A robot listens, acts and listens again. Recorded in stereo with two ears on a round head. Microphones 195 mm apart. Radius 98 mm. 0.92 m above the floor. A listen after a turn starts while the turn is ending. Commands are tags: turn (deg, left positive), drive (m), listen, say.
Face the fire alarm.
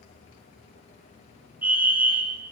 <turn deg="-30"/>
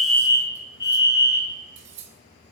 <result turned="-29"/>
<turn deg="20"/>
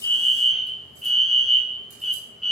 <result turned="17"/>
<say>Facing the fire alarm.</say>